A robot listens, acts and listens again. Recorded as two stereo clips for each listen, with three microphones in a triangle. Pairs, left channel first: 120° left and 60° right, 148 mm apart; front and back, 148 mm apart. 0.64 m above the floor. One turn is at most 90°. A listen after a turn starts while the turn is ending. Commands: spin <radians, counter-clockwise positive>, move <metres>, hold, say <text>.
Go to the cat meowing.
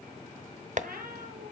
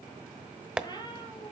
spin -1.05
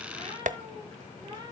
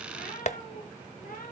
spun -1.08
move 1.0
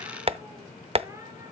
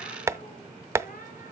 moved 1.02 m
spin 0.17
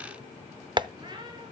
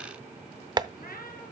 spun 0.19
move 1.0
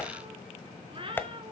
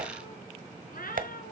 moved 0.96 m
spin -0.17
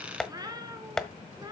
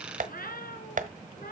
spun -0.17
move 1.0
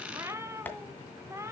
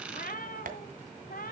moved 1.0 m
spin 0.17
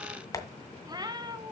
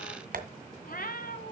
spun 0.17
move 1.0
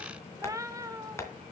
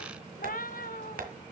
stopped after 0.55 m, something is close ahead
say Arrived at the cat meowing, straight ahead.